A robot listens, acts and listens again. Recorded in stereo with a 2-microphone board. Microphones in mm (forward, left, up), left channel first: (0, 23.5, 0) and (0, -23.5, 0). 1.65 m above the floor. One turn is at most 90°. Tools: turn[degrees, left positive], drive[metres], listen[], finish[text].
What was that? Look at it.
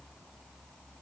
Action: listen[]
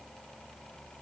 Action: listen[]
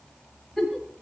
Action: turn[30]
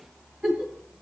Thought: So it is at 25° right.
Action: turn[-25]
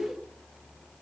Action: listen[]
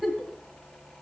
Action: finish[Facing the giggle.]